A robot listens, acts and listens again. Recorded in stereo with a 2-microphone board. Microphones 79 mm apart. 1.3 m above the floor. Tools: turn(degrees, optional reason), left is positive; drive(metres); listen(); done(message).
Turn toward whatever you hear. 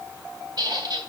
turn(degrees=-60, reason="The squeak: about 60° right or 120° right.")
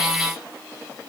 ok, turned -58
listen()
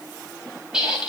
done("Found it: a squeak, straight ahead.")